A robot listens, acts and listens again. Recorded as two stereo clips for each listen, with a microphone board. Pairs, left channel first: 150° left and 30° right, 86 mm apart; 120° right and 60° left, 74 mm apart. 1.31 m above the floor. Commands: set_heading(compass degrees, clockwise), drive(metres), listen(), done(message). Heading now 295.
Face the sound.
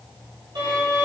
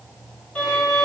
set_heading(340)
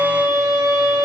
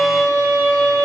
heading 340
done("Found it: a violin, straight ahead, 2 to 4 m away.")